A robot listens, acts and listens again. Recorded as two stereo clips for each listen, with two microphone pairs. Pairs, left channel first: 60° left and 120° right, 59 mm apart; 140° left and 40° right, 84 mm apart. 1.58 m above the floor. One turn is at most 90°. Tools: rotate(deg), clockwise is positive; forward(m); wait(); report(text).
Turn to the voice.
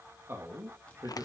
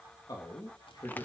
rotate(90)
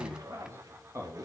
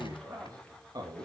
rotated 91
rotate(80)
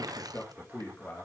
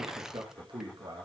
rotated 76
report("Facing the man speaking, 2 to 4 m away.")